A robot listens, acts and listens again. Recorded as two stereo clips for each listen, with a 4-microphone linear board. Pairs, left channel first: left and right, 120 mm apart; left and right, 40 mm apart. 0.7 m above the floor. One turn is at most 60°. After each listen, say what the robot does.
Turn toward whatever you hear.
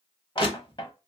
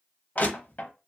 Turn 45° left.
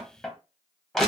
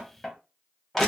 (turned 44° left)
Facing the crushing.